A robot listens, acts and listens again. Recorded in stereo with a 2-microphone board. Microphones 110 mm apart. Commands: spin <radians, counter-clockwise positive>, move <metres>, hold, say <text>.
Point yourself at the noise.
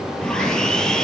spin 0.52
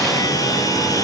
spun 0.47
spin 2.53
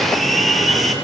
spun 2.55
say Found it: sawing, straight ahead, over 4 m away.